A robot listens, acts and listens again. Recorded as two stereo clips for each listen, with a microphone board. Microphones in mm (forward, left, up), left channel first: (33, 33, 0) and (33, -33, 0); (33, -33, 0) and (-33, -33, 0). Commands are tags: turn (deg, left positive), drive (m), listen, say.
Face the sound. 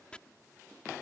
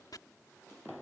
<turn deg="15"/>
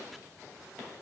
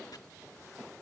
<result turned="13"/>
<listen/>
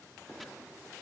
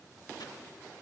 <listen/>
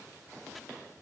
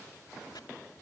<say>I heard chopping from this way, but can't make it out now.</say>